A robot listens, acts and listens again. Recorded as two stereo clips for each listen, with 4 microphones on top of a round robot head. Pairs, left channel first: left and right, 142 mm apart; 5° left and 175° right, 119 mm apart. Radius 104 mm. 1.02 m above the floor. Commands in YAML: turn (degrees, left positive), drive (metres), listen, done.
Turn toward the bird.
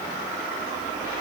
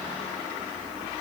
listen: true
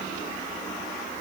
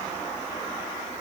listen: true
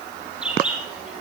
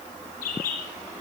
done: "Facing the bird, over 4 m away."